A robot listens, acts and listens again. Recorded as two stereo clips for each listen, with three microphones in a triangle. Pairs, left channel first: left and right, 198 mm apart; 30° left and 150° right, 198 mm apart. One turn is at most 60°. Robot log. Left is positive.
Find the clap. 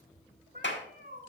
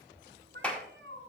note: The clap: 115° left.
cmd yaw +60
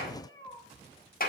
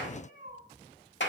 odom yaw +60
note: The clap is now 50° left.
cmd yaw +50
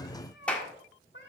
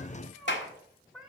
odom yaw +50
end: Found it: a clap, straight ahead.